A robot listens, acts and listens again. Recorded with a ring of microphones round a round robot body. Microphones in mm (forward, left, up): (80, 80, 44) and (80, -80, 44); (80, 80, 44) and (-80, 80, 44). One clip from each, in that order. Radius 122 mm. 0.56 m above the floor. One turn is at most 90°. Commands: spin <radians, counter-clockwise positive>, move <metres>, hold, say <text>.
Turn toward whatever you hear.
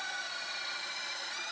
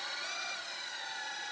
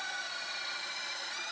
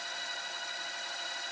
hold
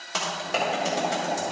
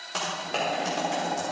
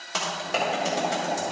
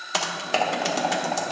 spin 1.57
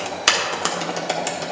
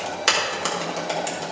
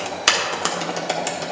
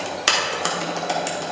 spin 0.96
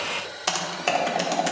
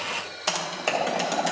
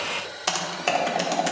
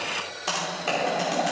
spin 0.17
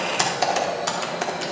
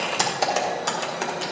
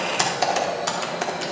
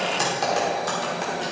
say Facing the typing on a keyboard, 1 to 2 m away.